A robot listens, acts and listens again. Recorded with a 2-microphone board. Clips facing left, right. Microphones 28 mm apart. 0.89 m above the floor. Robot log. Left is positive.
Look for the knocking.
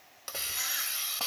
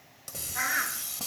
cmd idle
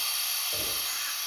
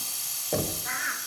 note: The knocking: about 50° right or 130° right.
cmd yaw -50
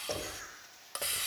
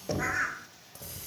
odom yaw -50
end: Found it: knocking, straight ahead.